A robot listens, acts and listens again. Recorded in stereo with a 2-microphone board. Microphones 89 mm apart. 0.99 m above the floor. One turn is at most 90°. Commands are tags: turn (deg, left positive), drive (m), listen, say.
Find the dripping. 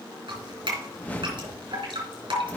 <turn deg="-65"/>
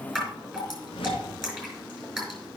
<say>Facing the dripping, over 4 m away.</say>